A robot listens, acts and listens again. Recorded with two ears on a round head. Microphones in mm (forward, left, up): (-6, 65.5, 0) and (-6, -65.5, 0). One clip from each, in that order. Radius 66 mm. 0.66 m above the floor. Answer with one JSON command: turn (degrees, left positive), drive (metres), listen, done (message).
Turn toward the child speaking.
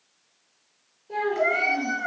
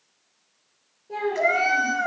{"turn": 30}
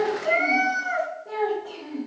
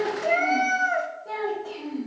{"turn": -50}
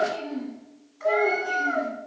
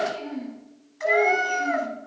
{"turn": -15}
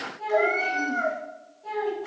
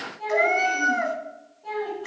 {"done": "Facing the child speaking, 2 to 4 m away."}